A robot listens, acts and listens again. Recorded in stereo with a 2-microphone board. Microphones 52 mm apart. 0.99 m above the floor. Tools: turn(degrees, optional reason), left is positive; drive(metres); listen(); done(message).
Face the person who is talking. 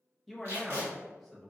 turn(degrees=30)
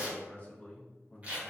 turn(degrees=145, reason="So it is at 145° left.")
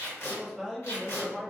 done("Facing the man speaking, under 1 m away.")